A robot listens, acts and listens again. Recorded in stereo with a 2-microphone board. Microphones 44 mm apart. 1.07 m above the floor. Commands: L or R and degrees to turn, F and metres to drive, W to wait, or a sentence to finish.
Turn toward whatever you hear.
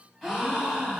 L30
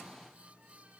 W
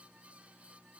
I heard a gasp, but can't make it out now. It was about 25° right or 145° left.